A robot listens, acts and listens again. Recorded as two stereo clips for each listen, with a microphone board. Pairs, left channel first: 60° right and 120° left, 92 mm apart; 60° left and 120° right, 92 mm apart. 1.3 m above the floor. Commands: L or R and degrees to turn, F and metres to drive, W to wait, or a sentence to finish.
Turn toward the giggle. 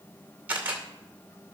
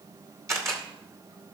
W
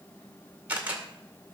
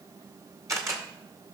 W
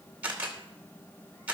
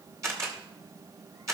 I can't make out a giggle to turn to.